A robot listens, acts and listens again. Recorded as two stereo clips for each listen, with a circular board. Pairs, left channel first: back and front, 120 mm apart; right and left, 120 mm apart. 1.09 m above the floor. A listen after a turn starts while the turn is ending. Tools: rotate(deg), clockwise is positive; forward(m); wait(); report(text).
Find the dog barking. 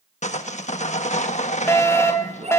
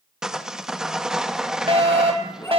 rotate(25)
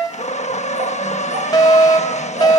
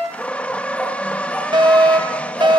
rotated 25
wait()
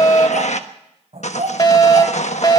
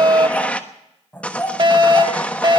rotate(15)
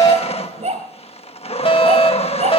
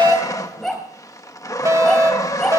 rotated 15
report("Facing the dog barking.")